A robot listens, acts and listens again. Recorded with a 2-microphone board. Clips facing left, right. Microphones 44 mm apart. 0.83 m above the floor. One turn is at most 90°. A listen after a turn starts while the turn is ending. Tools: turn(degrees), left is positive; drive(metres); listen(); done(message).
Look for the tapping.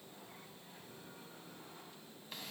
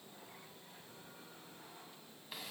listen()
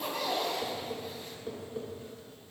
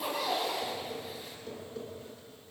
turn(degrees=20)
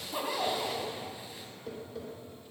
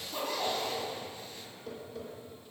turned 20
done("Facing the tapping.")